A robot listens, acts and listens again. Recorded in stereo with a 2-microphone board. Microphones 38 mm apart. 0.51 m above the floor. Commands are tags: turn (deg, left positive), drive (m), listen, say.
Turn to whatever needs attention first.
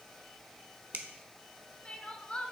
<turn deg="30"/>
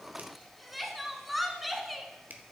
<say>Facing the crying.</say>